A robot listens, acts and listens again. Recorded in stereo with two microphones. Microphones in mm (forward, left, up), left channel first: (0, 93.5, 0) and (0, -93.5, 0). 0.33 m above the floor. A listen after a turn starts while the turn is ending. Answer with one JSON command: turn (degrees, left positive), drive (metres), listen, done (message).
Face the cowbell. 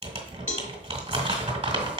{"turn": 40}
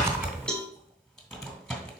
{"done": "Facing the cowbell, 1 to 2 m away."}